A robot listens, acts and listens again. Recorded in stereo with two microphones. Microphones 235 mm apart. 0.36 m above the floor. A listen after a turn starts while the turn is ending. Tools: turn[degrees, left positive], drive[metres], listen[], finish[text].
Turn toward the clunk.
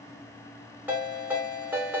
Action: listen[]
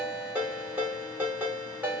Action: listen[]
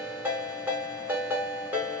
Action: finish[I can't make out a clunk, only a ringtone.]